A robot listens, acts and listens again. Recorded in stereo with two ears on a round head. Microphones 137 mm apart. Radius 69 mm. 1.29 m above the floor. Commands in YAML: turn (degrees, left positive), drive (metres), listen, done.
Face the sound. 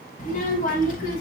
turn: 65
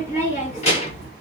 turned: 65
turn: 40
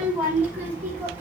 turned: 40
turn: -15
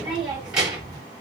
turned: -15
done: "Facing the child speaking, 2 to 4 m away."